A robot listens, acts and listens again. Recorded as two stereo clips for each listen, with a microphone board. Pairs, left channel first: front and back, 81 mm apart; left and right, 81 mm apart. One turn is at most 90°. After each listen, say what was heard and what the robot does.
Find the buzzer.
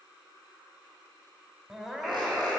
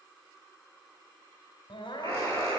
The buzzer: 95° right. Turn 90° right.
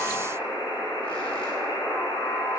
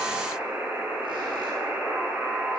The buzzer is now 25° right. Turn 25° right.
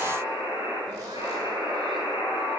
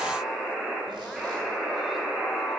Found it: a buzzer, straight ahead.